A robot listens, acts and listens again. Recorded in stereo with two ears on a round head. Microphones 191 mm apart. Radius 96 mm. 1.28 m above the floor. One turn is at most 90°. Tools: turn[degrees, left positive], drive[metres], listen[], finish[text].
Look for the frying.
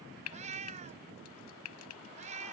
Thought: The frying: about 75° left or 105° left.
Action: turn[75]
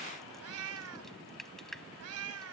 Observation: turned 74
Action: finish[Found it: frying, straight ahead.]